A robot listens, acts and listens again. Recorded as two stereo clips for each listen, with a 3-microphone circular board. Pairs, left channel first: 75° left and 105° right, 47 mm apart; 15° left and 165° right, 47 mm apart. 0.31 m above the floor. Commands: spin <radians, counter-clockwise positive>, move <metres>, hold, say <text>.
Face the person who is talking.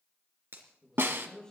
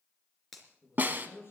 say Found it: a man speaking, straight ahead, over 4 m away.